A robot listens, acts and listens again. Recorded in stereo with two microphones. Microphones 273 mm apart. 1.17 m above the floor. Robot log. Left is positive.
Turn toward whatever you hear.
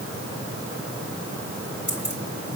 note: The keys jangling: about 40° left or 140° left.
cmd yaw +40
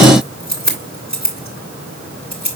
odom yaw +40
note: So it is at 100° left.
cmd yaw +100
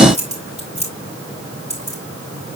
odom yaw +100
note: The keys jangling is now 25° right.
cmd yaw -25
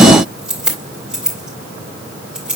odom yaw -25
end: Facing the keys jangling, 2 to 4 m away.